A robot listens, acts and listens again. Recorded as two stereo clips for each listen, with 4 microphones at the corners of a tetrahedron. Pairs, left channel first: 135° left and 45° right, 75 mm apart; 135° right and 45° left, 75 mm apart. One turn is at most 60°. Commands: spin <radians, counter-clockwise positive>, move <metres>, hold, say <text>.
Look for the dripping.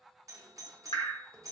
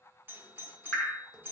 spin 1.05
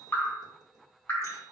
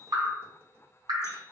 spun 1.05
spin 1.05
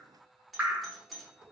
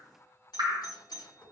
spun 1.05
spin 0.44
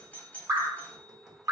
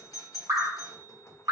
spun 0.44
say Facing the dripping, under 1 m away.